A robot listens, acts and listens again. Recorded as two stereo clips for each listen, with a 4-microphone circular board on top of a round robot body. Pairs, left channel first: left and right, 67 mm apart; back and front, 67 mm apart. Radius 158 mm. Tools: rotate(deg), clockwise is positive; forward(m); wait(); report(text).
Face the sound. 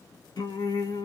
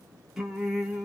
rotate(-80)
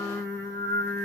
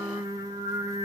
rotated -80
rotate(-30)
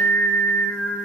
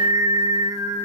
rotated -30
rotate(-30)
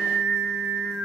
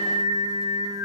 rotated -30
rotate(-10)
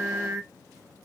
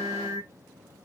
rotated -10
report("Facing the singing.")